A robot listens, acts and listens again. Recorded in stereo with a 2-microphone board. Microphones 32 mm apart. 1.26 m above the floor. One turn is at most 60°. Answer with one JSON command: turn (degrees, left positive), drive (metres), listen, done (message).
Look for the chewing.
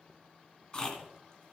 {"turn": 35}
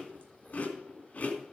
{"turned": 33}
{"turn": 60}
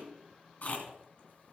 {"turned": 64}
{"turn": 50}
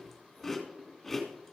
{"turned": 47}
{"done": "Facing the chewing."}